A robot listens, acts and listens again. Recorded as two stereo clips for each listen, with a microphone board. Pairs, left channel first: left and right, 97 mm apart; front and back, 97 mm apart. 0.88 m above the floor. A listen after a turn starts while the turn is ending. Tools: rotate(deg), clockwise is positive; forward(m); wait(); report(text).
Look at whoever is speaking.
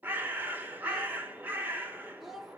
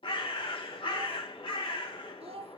rotate(-180)
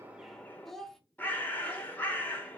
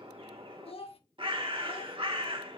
report("Facing the child speaking, under 1 m away.")